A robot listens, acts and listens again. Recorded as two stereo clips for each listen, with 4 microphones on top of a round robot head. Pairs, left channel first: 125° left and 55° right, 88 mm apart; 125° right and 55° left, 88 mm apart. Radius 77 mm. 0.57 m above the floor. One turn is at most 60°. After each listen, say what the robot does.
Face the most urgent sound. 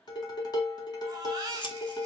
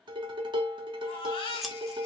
Turn 60° right.
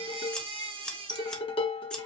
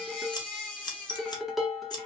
Turn 45° right.
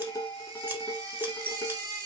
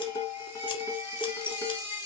Turn 10° right.
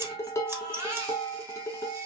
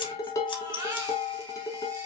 Facing the baby crying, 1 to 2 m away.